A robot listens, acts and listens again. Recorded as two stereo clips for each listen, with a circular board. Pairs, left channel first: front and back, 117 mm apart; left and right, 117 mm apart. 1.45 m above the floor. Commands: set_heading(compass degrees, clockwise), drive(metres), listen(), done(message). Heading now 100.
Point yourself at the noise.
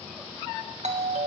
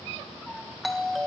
set_heading(280)
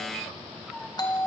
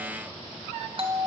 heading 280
set_heading(330)
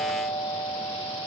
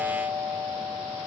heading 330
set_heading(355)
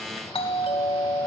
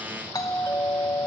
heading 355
set_heading(320)
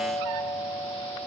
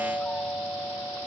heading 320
set_heading(300)
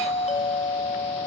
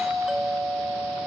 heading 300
done("Found it: a doorbell, straight ahead.")